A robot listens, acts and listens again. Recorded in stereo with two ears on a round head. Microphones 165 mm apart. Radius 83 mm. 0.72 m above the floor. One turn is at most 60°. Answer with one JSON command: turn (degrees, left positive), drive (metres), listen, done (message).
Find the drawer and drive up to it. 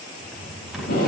{"turn": 30}
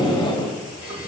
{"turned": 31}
{"turn": -35}
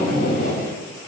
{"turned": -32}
{"listen": true}
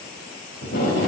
{"listen": true}
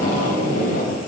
{"done": "Facing where the drawer came from. I can't hear it now. I did not reach it."}